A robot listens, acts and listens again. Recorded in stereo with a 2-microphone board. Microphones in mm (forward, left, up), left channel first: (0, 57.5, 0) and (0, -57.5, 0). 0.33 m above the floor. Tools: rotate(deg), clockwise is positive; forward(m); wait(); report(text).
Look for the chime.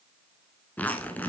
wait()
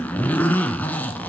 wait()
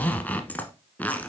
report("I can't make out a chime to turn to.")